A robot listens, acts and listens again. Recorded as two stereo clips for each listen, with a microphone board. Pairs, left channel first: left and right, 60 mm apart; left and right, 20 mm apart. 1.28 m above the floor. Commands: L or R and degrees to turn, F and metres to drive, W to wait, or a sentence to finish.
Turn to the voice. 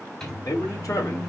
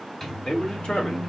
L65
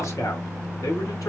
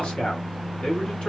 L70
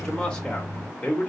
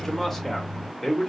L20
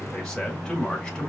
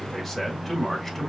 L10
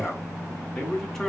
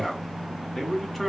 Found it: a man speaking, straight ahead, 2 to 4 m away.